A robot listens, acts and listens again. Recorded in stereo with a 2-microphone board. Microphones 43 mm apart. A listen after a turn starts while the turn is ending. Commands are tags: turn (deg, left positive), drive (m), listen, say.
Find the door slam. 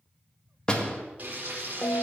<turn deg="20"/>
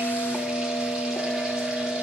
<listen/>
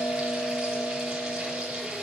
<say>I heard a door slam, but can't make it out now. It was about straight ahead or 140° left.</say>